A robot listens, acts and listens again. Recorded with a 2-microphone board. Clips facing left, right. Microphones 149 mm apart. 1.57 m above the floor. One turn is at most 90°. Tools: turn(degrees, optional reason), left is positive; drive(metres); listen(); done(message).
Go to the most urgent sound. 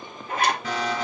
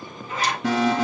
turn(degrees=-90)
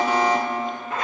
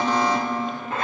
turn(degrees=10, reason="So it is at 10° left.")
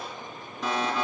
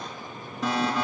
drive(metres=1.0)
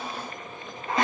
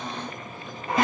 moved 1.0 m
drive(metres=1.0)
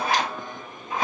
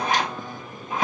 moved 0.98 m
listen()
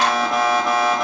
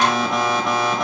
drive(metres=1.0)
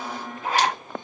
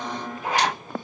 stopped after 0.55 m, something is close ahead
done("I am next to the alarm.")